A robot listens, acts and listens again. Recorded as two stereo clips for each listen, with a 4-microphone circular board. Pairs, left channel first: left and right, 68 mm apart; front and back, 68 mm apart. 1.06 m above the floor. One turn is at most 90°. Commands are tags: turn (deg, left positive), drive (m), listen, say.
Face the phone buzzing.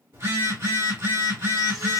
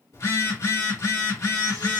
<turn deg="-35"/>
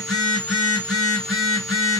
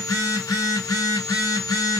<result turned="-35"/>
<say>Facing the phone buzzing.</say>